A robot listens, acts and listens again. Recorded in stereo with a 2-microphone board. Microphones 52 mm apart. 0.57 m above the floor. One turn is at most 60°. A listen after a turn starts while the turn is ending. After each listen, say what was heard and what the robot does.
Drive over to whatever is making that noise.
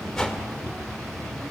Turn 30° left.
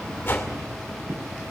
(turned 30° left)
So it is at 135° left. Turn 60° left.
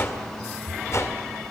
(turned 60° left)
The whoosh is now 80° left. Turn 60° left.
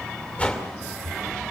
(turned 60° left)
The whoosh is now 20° left. Turn 20° left.
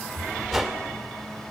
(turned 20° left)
Drive 1.0 m forward.
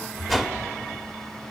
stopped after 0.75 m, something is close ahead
I am next to the whoosh.